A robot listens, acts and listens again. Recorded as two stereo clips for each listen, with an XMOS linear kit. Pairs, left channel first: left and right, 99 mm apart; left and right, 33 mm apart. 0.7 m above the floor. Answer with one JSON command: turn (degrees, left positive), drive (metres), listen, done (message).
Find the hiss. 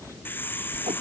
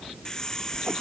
{"turn": 20}
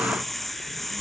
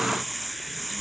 {"done": "Facing the hiss."}